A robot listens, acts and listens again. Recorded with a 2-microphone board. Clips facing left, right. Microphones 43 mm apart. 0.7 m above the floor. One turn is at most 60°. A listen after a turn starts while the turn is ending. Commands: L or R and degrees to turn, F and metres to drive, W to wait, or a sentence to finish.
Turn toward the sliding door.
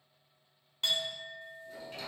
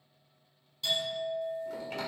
R60
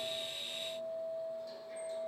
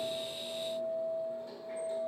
R30
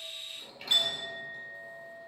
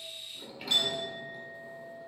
Facing the sliding door, 1 to 2 m away.